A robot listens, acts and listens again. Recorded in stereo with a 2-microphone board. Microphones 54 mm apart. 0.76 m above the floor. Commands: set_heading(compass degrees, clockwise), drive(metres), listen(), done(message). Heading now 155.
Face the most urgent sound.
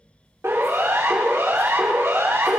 set_heading(215)
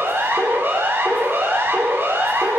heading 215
set_heading(270)
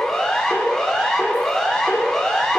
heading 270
set_heading(260)
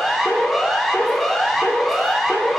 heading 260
done("Facing the siren.")